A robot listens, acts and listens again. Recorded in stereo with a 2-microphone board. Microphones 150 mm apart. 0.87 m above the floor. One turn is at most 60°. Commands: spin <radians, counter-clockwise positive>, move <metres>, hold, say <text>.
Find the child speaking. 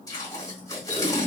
hold
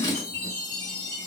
hold
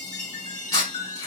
say I can't make out a child speaking to turn to.